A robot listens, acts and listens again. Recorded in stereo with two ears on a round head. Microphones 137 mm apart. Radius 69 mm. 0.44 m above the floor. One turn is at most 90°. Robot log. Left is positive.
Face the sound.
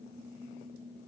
cmd idle
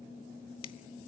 note: The finger snap: about 35° left or 145° left.
cmd yaw +35
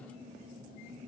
cmd idle
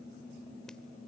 cmd idle
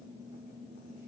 end: I heard a finger snap, but can't make it out now. It was about straight ahead or 110° left.